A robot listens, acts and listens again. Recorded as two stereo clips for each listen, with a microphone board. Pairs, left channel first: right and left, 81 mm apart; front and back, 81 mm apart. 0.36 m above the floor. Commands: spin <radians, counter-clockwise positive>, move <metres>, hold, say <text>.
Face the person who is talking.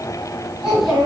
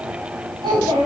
spin 2.97
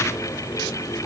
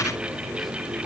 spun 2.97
hold
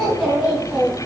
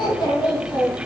say Facing the child speaking, 2 to 4 m away.